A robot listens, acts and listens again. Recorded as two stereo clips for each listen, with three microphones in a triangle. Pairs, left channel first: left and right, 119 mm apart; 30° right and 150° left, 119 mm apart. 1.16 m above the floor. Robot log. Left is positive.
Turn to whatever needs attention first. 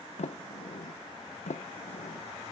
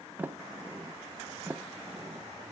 cmd idle
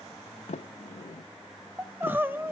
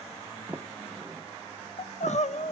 note: The crying: 15° right.
cmd yaw -15
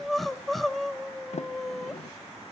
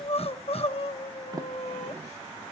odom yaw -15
end: Found it: crying, straight ahead, under 1 m away.